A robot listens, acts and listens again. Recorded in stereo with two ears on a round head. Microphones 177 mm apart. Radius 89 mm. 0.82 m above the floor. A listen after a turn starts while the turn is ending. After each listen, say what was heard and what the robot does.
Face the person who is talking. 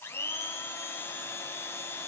Keep listening.
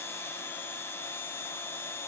Keep listening.
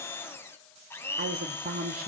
The woman speaking: about 45° right or 135° right. Turn 45° right.
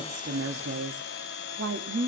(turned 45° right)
So it is at 80° right. Turn 80° right.
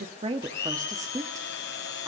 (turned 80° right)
The woman speaking is now 20° right. Turn 20° right.
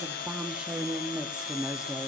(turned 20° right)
Found it: a woman speaking, straight ahead, 1 to 2 m away.